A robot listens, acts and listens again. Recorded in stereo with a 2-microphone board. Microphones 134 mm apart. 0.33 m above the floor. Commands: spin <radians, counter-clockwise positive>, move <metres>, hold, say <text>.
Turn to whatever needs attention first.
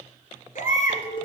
spin 1.57
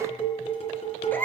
spin 0.26
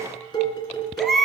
say Facing the baby crying.